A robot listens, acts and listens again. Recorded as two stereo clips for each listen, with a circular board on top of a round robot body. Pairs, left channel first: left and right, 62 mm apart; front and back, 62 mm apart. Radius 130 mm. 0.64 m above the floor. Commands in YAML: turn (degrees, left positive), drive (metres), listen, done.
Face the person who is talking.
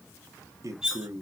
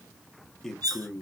turn: -80
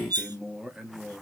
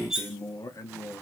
turn: -10
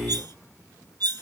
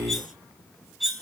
listen: true
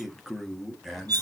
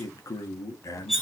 done: "Found it: a man speaking, straight ahead."